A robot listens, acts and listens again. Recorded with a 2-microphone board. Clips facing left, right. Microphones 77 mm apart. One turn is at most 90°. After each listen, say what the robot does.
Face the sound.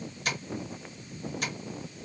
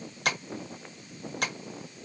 Turn 65° right.
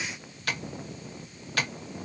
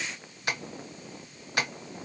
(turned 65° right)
Turn 25° right.
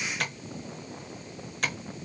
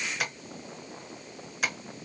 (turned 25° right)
Turn 10° right.
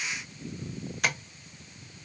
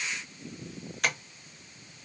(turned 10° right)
Facing the tapping, under 1 m away.